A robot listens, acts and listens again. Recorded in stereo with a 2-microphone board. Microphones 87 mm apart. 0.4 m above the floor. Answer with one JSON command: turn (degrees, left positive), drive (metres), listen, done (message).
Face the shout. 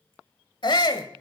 {"turn": 60}
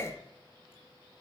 {"turn": 35}
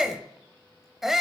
{"done": "Found it: a shout, straight ahead."}